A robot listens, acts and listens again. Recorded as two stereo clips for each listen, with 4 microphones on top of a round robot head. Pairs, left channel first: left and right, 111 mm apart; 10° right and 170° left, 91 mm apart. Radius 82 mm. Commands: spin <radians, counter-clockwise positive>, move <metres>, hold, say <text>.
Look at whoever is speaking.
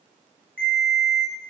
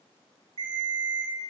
hold
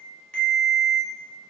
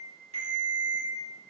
hold
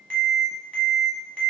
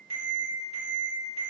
say I can't make out anyone speaking to turn to.